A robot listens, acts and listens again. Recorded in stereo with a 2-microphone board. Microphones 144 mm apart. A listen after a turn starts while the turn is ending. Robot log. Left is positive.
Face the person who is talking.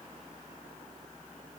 cmd idle
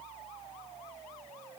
cmd idle
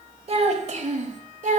note: The child speaking: about 60° right or 120° right.
cmd yaw -60
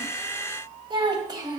note: So it is at 30° right.
cmd yaw -30
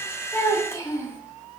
note: The child speaking is now 20° left.
cmd yaw +20
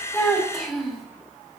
end: Facing the child speaking, 1 to 2 m away.